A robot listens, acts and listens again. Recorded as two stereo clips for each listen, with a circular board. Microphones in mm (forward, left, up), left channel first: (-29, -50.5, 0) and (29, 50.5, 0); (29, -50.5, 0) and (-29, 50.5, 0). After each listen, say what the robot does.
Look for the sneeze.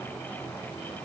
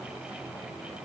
Keep listening.
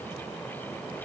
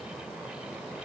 Keep listening.
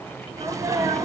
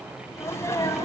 Facing the sneeze, 2 to 4 m away.